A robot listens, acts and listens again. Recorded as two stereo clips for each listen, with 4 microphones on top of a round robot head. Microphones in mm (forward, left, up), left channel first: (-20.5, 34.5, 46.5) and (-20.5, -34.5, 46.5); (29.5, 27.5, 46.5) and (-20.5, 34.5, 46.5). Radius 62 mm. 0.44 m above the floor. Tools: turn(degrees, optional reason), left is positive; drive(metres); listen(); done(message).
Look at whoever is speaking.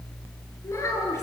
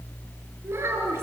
turn(degrees=140, reason="The child speaking: 140° left.")
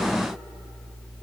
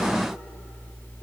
listen()
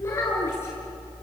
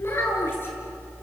turn(degrees=30, reason="The child speaking is now 30° left.")
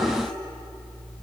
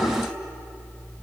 listen()
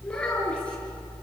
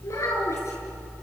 turn(degrees=15, reason="The child speaking is now 15° left.")
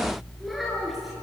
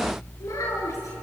done("Facing the child speaking, over 4 m away.")